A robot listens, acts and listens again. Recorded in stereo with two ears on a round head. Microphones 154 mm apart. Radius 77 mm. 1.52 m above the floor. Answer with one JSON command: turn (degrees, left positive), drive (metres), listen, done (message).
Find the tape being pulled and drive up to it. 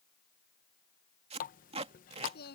{"turn": -35}
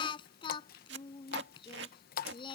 {"turn": -105}
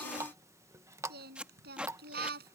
{"drive": 1.0}
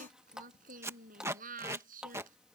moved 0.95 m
{"turn": -15}
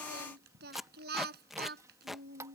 {"drive": 1.0}
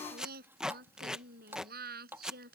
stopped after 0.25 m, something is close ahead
{"done": "I am next to the tape being pulled."}